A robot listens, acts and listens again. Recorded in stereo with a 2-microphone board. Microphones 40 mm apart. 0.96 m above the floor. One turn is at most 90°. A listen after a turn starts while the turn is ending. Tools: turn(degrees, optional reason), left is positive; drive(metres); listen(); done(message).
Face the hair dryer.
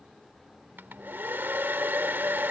turn(degrees=-50, reason="The hair dryer: about 50° right or 130° right.")
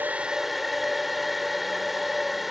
done("Found it: a hair dryer, straight ahead.")